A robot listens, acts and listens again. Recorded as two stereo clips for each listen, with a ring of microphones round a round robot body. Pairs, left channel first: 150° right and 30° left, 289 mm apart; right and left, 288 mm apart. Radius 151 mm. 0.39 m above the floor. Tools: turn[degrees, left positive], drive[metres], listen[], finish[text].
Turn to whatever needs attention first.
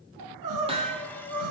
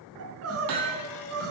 Thought: The crying: 50° left.
Action: turn[50]
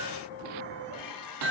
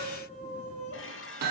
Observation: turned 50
Thought: The crying is now 25° right.
Action: turn[-25]
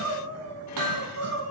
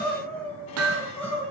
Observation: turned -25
Action: finish[Facing the crying, 2 to 4 m away.]